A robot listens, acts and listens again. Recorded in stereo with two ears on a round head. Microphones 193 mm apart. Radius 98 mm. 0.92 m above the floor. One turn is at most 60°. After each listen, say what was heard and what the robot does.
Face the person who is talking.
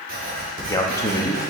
The man speaking: about 15° left or 165° left. Turn 15° left.
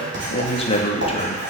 So it is at 150° left. Turn 60° left.
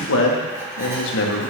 The man speaking is now 105° left. Turn 60° left.
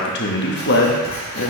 The man speaking is now 55° left. Turn 55° left.
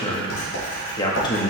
The man speaking is now 20° left. Turn 20° left.
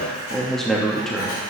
Facing the man speaking.